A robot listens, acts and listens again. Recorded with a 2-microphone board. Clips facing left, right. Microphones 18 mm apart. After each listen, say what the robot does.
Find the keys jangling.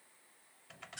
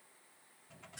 Keep listening.
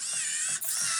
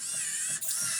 Turn 20° right.
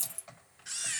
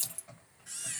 Turn 30° right.
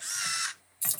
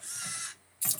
Facing the keys jangling, 1 to 2 m away.